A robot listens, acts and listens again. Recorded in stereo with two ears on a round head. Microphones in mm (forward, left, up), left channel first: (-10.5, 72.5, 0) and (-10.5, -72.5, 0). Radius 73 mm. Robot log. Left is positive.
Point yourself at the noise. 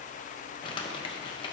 note: The crumpling: about 30° left or 150° left.
cmd yaw +30
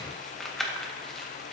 end: Found it: crumpling, straight ahead, 1 to 2 m away.